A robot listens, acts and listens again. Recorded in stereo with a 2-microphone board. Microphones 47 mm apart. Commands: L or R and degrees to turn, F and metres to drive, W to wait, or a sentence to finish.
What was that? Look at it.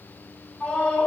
L20
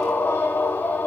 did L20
L140
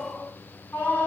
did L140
L40
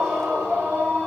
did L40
R15
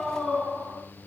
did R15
Found it: a scream, straight ahead, over 4 m away.